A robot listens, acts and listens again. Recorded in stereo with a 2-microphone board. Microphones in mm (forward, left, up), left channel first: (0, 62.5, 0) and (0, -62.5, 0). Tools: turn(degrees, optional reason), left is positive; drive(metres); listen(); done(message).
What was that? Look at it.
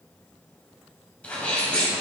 turn(degrees=30)
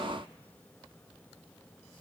listen()
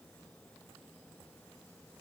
done("I heard a sneeze, but can't make it out now. It was about 20° right or 140° left.")